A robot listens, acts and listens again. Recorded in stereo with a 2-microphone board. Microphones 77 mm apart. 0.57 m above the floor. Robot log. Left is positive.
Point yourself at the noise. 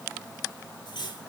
cmd yaw +90
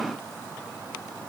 cmd idle
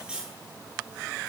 note: The cutlery clinking is now 10° right.
cmd yaw -10
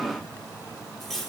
end: Found it: cutlery clinking, straight ahead.